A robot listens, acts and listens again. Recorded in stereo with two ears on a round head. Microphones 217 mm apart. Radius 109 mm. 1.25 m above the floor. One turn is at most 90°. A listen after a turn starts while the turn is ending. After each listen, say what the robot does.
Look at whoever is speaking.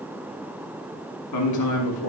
Turn 90° left.
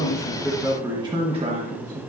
Turn 35° right.
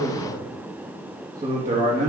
Turn 35° right.
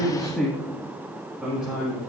Found it: a man speaking, straight ahead, 2 to 4 m away.